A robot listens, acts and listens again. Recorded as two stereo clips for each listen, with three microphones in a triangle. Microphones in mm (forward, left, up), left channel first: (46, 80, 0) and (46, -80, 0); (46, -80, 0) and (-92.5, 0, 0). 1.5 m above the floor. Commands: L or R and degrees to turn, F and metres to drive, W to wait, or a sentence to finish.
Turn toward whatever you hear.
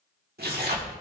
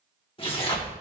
R90
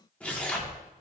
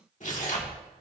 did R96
L10
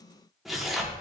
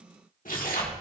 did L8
Facing the tearing paper, 1 to 2 m away.